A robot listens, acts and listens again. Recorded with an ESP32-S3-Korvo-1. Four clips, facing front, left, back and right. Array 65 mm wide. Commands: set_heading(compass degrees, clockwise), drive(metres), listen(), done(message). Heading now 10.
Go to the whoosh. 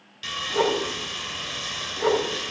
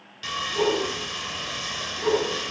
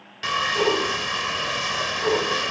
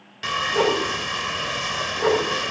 set_heading(75)
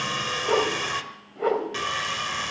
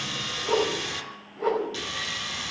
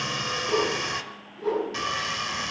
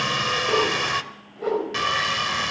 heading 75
drive(1.0)
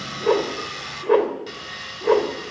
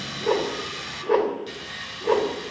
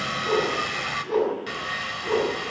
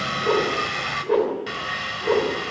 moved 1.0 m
drive(1.0)
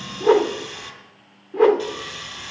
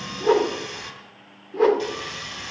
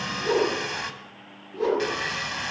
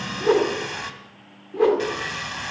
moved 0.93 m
drive(1.0)
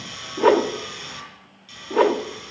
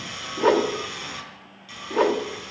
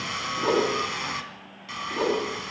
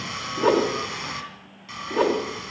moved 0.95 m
set_heading(65)
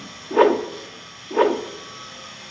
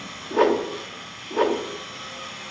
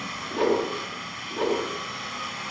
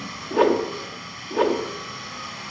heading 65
drive(1.0)
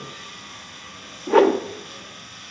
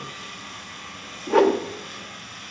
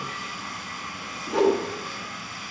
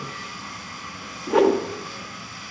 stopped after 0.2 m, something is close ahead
set_heading(55)
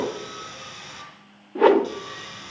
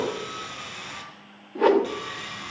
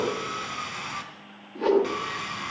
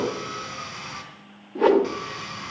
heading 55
done("Arrived at the whoosh, straight ahead.")